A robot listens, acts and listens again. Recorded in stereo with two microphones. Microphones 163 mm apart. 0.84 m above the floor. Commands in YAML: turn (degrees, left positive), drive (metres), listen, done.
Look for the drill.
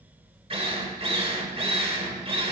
turn: -35
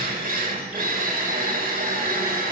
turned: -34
turn: -105
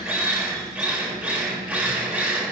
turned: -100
done: "Found it: a drill, straight ahead, 1 to 2 m away."